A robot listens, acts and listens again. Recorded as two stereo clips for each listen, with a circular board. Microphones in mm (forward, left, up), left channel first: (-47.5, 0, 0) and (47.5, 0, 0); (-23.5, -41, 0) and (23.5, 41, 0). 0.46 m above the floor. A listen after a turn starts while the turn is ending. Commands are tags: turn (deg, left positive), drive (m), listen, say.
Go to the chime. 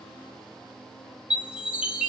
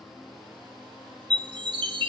<turn deg="75"/>
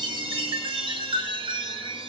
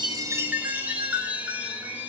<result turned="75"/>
<turn deg="-10"/>
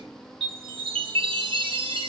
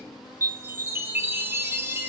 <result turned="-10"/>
<drive m="1.0"/>
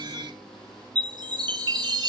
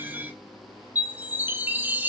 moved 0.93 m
<drive m="1.0"/>
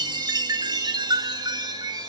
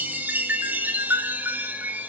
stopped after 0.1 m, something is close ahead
<say>Arrived at the chime, straight ahead.</say>